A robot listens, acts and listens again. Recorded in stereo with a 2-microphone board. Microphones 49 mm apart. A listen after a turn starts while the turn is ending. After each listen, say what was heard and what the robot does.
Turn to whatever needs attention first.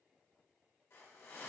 Keep listening.
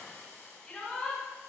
The shout: about 20° left or 160° left. Turn 20° left.
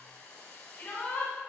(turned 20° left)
So it is at 140° left. Turn 140° left.
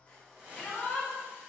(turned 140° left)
The shout is now 25° left. Turn 25° left.
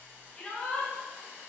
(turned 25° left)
The shout is now 20° left. Turn 20° left.
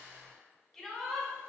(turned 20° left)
Facing the shout, 1 to 2 m away.